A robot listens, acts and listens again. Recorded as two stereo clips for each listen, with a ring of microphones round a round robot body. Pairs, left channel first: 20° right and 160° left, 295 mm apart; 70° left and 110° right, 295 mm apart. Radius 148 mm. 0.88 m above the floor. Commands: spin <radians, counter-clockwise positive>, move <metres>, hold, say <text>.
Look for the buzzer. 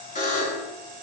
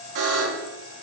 spin -1.48
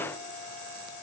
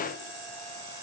hold
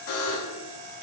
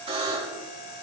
spin -0.70
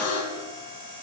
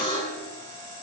say Facing the buzzer.